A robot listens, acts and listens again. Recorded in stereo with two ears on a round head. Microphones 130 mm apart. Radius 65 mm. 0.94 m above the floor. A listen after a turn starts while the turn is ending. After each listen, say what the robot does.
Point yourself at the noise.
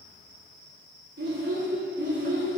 Turn 55° right.
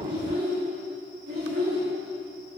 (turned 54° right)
Turn 80° right.
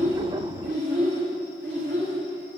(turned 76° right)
Turn 35° right.
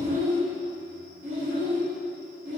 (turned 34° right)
Facing the child speaking.